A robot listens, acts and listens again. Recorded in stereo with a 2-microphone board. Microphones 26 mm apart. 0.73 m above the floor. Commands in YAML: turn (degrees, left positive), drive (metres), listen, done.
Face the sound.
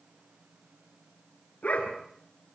turn: 65
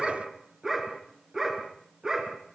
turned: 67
turn: -25
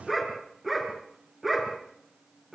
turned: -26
turn: -10
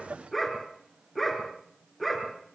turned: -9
done: "Facing the dog barking."